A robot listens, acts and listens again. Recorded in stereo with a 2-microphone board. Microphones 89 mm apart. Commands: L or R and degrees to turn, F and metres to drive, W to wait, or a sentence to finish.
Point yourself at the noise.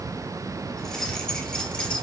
L30
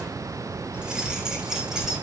Found it: keys jangling, straight ahead.